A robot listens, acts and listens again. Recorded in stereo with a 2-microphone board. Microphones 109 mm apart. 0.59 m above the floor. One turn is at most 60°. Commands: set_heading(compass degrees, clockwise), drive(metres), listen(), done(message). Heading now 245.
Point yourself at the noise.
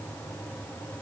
listen()
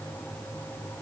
listen()
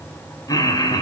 set_heading(205)
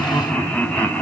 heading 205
set_heading(190)
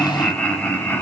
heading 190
set_heading(175)
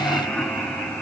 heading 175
set_heading(165)
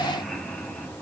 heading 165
listen()
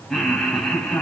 done("Facing the laughter.")